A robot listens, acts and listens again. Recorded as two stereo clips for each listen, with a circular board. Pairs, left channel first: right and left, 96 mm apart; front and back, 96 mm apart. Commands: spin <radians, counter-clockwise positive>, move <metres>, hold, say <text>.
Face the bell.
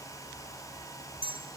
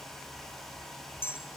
spin 1.13
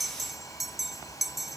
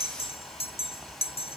say Found it: a bell, straight ahead.